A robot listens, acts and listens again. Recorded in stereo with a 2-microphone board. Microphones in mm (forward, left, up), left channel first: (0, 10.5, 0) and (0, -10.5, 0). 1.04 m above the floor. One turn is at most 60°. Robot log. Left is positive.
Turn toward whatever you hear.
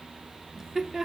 note: The laughter: about 25° right or 155° right.
cmd yaw -25
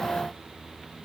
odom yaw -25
cmd idle
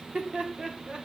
note: So it is at 130° right.
cmd yaw -60
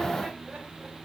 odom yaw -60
note: Nothing new. It was at 70° right.
cmd yaw -60
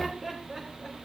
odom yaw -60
note: The laughter is now 25° right.
cmd yaw -25
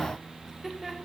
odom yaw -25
note: The laughter is now 15° right.
cmd yaw -15
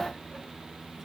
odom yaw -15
cmd idle
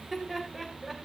end: Found it: laughter, straight ahead.